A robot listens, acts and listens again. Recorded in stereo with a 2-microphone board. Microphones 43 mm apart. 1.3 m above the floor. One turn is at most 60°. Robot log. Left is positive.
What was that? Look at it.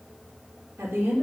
cmd yaw -60
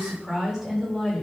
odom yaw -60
note: So it is at 10° right.
cmd yaw -10
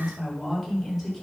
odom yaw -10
end: Facing the woman speaking.